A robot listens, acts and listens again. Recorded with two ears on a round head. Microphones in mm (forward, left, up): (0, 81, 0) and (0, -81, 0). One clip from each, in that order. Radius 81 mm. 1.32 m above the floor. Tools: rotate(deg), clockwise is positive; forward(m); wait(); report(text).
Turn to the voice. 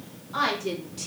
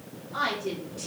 rotate(-20)
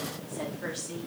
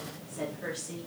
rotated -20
report("Found it: a woman speaking, straight ahead, 2 to 4 m away.")